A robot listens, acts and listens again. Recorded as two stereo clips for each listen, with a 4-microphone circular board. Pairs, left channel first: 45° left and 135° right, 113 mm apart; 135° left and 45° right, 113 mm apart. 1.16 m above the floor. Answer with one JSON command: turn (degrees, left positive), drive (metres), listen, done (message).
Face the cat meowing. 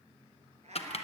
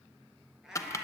{"turn": -130}
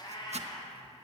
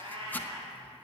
{"done": "Found it: a cat meowing, straight ahead, over 4 m away."}